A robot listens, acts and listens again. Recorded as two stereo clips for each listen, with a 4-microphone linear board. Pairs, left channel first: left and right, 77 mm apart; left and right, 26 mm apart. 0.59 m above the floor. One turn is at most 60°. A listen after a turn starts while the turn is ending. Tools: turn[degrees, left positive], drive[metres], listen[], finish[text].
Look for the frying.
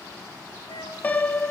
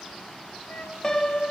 Action: listen[]
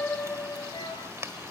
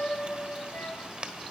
Thought: The frying: about 35° right or 145° right.
Action: turn[-35]
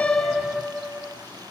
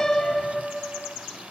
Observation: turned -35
Action: listen[]
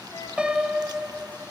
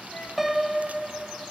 Action: listen[]
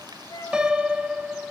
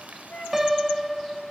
Action: finish[I heard frying, but can't make it out now. It was about straight ahead or 110° right.]